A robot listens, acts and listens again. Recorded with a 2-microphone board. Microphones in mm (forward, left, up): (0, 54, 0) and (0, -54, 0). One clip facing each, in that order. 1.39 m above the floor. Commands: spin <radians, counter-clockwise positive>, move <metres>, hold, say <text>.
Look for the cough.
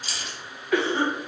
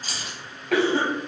spin -1.57
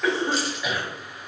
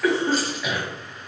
say Found it: a cough, straight ahead, 1 to 2 m away.